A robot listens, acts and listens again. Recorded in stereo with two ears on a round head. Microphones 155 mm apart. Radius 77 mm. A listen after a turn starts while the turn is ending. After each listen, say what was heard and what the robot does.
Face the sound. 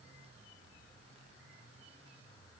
Keep listening.
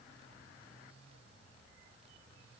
Keep listening.
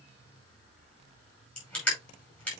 Turn 30° left.
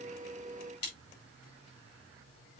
So it is at 140° left. Turn 140° left.
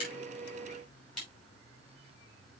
Keep listening.
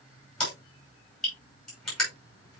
Facing the crushing, over 4 m away.